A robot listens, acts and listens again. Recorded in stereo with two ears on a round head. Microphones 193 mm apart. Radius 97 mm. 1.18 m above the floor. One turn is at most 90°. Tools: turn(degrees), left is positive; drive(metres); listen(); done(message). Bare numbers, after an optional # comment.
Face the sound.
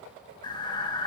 # The breathing: about 20° left or 160° left.
turn(20)
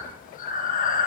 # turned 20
# So it is at 140° left.
turn(90)
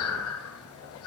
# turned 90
# The breathing is now 70° left.
turn(70)
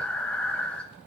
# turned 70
done("Found it: breathing, straight ahead.")